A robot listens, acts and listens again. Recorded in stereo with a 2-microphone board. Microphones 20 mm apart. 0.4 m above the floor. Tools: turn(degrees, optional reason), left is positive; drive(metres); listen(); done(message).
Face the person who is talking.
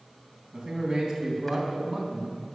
turn(degrees=-40, reason="The man speaking: about 40° right or 140° right.")
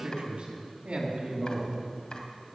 turn(degrees=-120, reason="So it is at 120° right.")
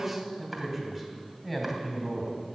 done("Facing the man speaking, 2 to 4 m away.")